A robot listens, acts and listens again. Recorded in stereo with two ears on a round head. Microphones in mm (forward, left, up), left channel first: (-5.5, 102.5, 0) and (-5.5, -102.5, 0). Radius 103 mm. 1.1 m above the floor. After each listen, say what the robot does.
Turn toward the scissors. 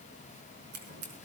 Turn 50° right.
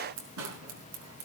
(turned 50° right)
Turn 80° right.
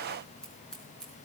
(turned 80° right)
Found it: scissors, straight ahead, over 4 m away.